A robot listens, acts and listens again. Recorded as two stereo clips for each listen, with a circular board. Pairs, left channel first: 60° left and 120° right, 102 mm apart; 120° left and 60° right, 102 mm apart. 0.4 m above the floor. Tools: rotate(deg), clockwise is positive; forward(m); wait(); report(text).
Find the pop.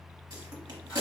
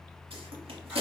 rotate(70)
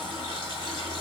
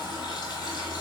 report("Facing where the pop came from. I can't hear it now.")